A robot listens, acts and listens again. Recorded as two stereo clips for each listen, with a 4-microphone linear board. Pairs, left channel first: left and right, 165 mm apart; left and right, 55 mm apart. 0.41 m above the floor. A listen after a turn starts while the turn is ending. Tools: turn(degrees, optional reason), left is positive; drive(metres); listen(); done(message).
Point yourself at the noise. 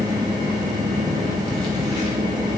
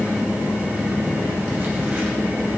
listen()
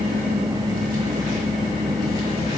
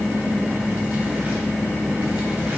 listen()
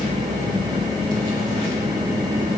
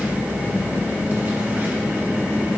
done("I can't make out anything.")